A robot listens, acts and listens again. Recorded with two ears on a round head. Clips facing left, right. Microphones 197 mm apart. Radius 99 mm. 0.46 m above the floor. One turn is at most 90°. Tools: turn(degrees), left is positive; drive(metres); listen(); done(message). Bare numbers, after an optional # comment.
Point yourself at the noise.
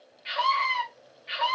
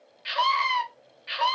# The scream: about 60° right or 120° right.
turn(-60)
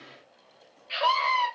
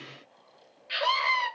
# So it is at 20° right.
turn(-20)
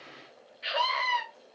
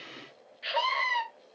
done("Facing the scream.")